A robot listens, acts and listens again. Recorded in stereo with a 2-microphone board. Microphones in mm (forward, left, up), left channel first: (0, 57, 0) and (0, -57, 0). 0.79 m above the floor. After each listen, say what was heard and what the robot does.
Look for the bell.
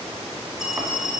Turn 30° right.
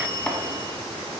So it is at 145° right. Turn 145° right.
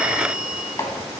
Facing the bell, 1 to 2 m away.